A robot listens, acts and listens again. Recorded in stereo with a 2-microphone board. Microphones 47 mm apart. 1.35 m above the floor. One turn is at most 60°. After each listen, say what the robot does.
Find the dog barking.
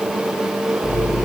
Keep listening.
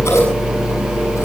Keep listening.
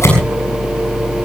I can't make out a dog barking, only scissors.